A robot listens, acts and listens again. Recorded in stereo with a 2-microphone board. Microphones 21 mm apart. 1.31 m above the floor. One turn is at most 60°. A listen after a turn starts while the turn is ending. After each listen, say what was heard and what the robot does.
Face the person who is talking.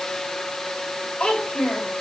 Turn 60° left.
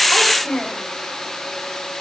So it is at 40° left. Turn 40° left.
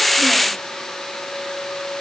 Keep listening.
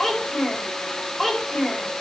Found it: a child speaking, straight ahead.